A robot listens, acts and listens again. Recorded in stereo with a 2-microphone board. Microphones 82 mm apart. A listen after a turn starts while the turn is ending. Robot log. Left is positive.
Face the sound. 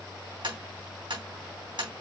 note: The tapping: about 75° right or 105° right.
cmd yaw -75
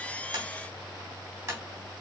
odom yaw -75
note: So it is at 30° right.
cmd yaw -30
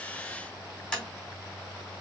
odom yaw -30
note: The tapping is now 10° left.
cmd yaw +10
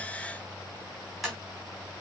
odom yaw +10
end: Facing the tapping, 2 to 4 m away.